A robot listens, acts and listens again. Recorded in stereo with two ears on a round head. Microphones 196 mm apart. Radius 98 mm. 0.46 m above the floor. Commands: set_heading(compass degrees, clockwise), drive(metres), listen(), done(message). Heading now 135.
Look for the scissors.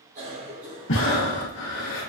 listen()
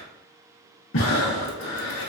listen()
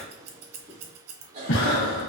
set_heading(225)
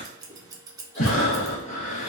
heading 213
set_heading(228)
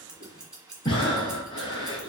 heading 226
done("Found it: scissors, straight ahead.")